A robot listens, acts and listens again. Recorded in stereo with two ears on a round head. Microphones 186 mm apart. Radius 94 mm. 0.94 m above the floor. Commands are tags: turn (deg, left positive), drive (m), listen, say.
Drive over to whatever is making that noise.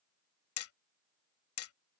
<turn deg="70"/>
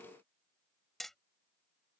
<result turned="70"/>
<drive m="1.0"/>
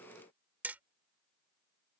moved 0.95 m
<turn deg="-10"/>
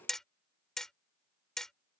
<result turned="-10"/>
<drive m="1.0"/>
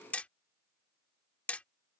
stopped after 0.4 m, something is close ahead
<say>Arrived at the hammering, straight ahead.</say>